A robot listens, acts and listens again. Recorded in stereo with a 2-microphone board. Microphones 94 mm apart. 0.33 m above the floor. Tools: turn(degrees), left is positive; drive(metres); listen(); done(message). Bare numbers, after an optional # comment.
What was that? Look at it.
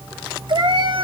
# The cat meowing: about 60° right or 120° right.
turn(-60)
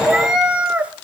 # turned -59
# So it is at 15° right.
turn(-15)
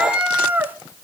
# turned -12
# The cat meowing is now 20° right.
turn(-20)
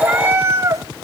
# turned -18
# The cat meowing is now 35° right.
turn(-35)
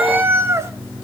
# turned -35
# The cat meowing is now 30° right.
turn(-30)
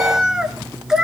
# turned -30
done("Facing the cat meowing.")